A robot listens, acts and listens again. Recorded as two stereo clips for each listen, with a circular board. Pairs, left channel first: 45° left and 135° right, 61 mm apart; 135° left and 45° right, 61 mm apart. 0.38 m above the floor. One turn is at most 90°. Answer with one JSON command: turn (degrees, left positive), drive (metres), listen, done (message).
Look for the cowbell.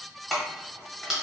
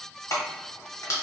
{"listen": true}
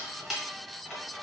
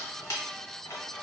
{"listen": true}
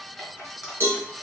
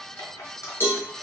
{"turn": 90}
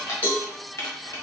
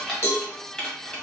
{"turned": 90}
{"turn": 90}
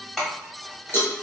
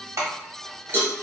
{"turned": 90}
{"done": "Facing the cowbell."}